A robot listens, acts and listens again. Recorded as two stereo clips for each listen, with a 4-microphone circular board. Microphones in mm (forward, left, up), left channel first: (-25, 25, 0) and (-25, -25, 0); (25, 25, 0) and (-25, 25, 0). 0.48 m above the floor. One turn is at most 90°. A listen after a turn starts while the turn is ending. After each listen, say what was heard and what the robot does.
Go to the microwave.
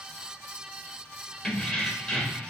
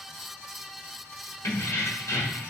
Keep listening.
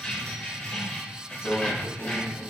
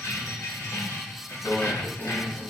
The microwave: 70° left. Turn 70° left.
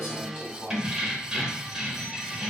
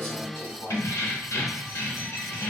The microwave is now 40° left. Turn 40° left.
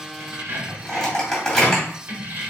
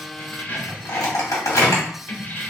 The microwave is now 10° left. Turn 10° left.
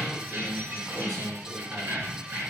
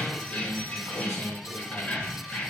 Keep listening.
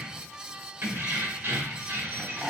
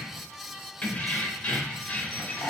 Drive 1.0 m forward.
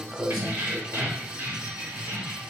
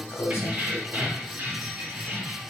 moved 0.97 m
The microwave is now 10° right. Turn 10° right.
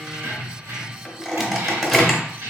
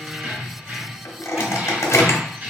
Drive 1.0 m forward.
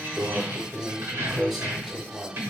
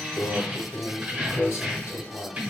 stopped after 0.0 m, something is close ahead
I am next to the microwave.